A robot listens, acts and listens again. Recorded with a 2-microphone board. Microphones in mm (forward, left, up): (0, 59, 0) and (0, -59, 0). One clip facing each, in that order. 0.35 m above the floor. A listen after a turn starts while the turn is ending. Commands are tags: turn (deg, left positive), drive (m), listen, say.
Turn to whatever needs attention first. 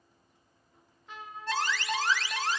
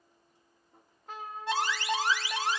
<turn deg="-30"/>
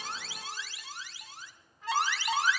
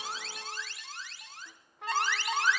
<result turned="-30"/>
<turn deg="15"/>
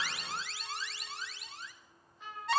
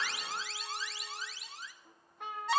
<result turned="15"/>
<say>Found it: an alarm, straight ahead.</say>